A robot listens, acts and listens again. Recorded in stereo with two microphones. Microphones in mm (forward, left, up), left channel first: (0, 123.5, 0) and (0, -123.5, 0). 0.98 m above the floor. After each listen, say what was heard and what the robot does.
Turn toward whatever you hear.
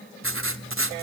The writing: about 60° right or 120° right. Turn 60° right.
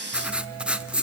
Facing the writing, 1 to 2 m away.